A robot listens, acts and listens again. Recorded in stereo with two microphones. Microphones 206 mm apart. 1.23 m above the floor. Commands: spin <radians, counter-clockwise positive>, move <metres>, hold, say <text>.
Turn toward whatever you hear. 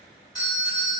spin 0.35
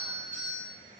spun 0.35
spin 2.44
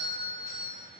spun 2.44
spin 0.26
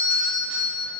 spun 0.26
spin 0.17
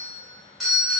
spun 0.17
say Found it: a doorbell, straight ahead, 1 to 2 m away.